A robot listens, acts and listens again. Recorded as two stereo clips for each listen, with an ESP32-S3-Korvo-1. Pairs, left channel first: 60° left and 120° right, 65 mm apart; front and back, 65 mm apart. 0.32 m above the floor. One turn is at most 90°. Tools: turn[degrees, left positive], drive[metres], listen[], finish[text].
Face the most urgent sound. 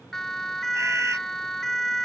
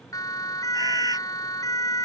Thought: The siren: 25° right.
Action: turn[-25]
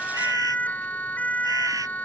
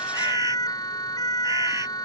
Action: finish[Found it: a siren, straight ahead.]